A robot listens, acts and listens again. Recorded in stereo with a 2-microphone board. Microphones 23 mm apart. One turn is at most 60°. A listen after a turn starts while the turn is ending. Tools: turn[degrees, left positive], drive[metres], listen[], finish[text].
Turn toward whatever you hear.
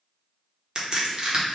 Thought: The crack: about 30° right or 150° right.
Action: turn[-30]
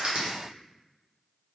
Thought: So it is at 115° right.
Action: turn[-60]
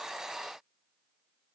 Thought: Nothing new. It was at 55° right.
Action: turn[-55]
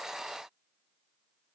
Action: finish[I heard a crack from this way, but can't make it out now.]